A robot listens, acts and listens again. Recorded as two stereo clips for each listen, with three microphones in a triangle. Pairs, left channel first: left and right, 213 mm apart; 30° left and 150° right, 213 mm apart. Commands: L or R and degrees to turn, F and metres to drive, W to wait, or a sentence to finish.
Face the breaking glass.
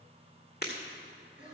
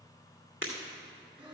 L50
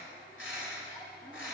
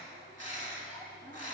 I heard breaking glass from this way, but can't make it out now.